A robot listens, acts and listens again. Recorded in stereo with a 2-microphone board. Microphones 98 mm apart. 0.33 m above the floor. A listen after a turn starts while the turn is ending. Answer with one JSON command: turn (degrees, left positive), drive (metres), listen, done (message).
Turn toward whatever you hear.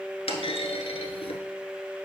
{"turn": 90}
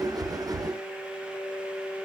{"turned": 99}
{"turn": -10}
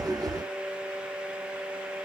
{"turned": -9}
{"done": "Facing where the clunk came from. I can't hear it now."}